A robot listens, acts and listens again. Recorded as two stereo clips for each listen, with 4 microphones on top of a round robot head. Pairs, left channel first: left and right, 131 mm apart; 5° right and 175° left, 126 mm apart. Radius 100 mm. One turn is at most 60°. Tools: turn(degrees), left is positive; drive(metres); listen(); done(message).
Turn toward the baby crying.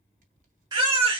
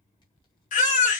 turn(degrees=-25)
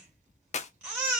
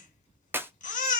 turn(degrees=-10)
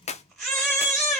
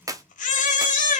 done("Found it: a baby crying, straight ahead, 2 to 4 m away.")